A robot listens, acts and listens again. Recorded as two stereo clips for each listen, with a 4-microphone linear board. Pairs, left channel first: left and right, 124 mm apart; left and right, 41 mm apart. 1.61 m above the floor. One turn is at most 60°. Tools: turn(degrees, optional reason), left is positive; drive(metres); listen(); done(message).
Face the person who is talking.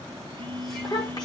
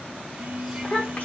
turn(degrees=35, reason="The child speaking: about 35° left or 145° left.")
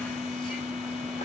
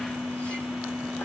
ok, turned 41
listen()
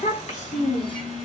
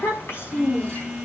turn(degrees=60, reason="So it is at 105° left.")
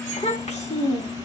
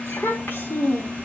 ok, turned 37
turn(degrees=60, reason="The child speaking is now 65° left.")
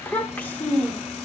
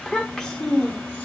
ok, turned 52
turn(degrees=15, reason="The child speaking is now 15° left.")
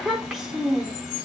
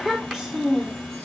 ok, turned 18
done("Found it: a child speaking, straight ahead.")